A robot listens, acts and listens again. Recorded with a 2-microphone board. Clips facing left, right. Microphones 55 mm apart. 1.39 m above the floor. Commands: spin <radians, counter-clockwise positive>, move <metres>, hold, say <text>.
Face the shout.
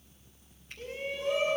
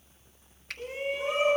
spin -0.35
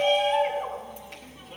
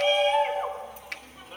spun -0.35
say Found it: a shout, straight ahead, over 4 m away.